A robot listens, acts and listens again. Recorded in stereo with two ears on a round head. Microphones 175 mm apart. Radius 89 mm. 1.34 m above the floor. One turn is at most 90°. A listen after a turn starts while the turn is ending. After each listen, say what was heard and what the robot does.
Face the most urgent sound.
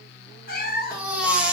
Turn 30° right.
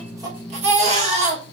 So it is at 145° right. Turn 90° right.
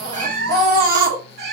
The baby crying is now 45° right. Turn 45° right.
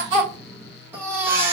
The baby crying is now 10° right. Turn 10° right.
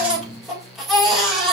Facing the baby crying.